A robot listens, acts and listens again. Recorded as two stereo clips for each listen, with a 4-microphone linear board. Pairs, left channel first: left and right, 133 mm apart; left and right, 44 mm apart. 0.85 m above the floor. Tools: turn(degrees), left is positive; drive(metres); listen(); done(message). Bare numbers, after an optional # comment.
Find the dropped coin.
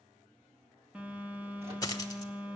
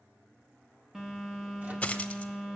# The dropped coin: about 25° left or 155° left.
turn(25)
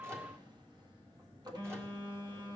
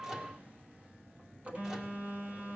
listen()
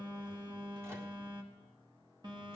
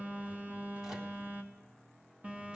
done("I heard a dropped coin, but can't make it out now. It was about straight ahead or 130° left.")